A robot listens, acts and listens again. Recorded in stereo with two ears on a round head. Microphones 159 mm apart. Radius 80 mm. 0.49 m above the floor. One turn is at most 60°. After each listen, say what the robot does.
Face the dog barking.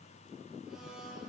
Keep listening.
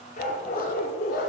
Turn 55° left.
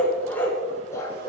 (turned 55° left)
Turn 20° left.
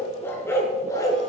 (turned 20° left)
Turn 20° left.
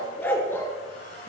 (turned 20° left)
Turn 15° left.
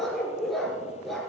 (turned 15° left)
Found it: a dog barking, straight ahead.